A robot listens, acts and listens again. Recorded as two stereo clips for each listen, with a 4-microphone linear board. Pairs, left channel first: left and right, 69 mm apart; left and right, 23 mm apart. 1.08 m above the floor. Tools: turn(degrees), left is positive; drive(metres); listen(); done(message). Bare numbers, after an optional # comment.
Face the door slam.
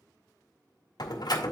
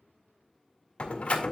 turn(90)
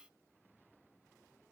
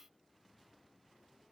done("Facing where the door slam came from. I can't hear it now.")